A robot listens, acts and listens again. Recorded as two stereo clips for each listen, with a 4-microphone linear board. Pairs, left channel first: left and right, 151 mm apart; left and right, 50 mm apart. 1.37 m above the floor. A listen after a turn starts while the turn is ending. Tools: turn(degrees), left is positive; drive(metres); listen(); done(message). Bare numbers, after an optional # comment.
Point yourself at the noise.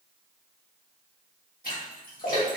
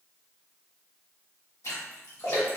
# The splash: about 70° left or 110° left.
turn(70)
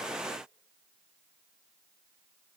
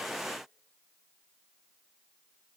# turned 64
listen()
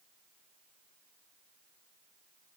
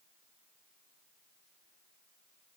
done("I heard a splash, but can't make it out now. It was about 5° left or 45° left.")